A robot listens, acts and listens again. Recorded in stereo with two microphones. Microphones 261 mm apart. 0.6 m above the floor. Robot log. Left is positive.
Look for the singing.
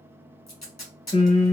note: The singing: about 30° left or 150° left.
cmd yaw +30
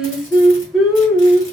end: Found it: singing, straight ahead.